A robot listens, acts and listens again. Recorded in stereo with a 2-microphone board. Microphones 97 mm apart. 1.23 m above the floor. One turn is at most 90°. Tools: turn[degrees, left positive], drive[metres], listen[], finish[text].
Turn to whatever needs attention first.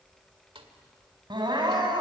Thought: The crying: about 50° right or 130° right.
Action: turn[-50]
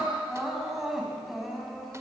Action: finish[Found it: crying, straight ahead.]